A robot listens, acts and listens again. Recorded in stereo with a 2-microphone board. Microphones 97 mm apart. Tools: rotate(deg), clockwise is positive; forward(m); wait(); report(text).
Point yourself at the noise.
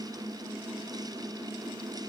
wait()
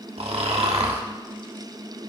rotate(90)
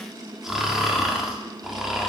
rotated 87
report("Facing the snoring.")